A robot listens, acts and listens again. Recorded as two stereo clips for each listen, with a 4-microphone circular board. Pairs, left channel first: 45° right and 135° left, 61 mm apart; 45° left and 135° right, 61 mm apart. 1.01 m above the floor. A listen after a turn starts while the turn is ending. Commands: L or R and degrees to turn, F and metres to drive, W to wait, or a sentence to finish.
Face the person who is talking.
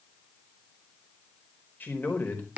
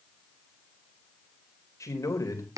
L15
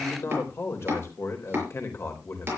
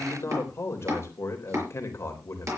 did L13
Found it: a man speaking, straight ahead.